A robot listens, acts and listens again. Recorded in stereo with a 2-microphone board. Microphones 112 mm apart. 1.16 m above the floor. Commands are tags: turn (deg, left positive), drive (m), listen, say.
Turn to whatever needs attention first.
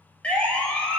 <turn deg="30"/>
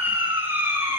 <turn deg="-20"/>
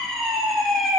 <say>Facing the siren, over 4 m away.</say>